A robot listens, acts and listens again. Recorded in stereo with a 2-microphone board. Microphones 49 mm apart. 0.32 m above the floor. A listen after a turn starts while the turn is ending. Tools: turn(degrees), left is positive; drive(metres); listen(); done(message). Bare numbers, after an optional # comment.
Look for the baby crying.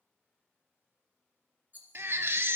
# The baby crying: about 60° right or 120° right.
turn(-60)
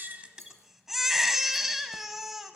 done("Found it: a baby crying, straight ahead, under 1 m away.")